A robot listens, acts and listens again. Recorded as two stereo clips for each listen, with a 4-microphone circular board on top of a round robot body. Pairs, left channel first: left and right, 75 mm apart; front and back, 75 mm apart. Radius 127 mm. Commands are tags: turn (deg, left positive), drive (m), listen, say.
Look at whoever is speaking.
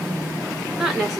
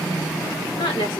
<say>Found it: a woman speaking, straight ahead.</say>